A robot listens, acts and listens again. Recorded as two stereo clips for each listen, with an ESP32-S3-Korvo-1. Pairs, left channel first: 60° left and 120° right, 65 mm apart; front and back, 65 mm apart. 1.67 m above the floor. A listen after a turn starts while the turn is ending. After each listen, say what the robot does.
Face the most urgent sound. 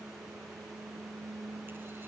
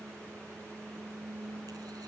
Keep listening.
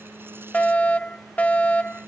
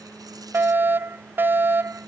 Turn 125° left.
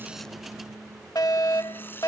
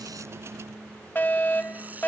Turn 55° left.
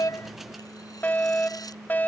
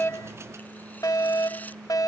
Facing the fire alarm.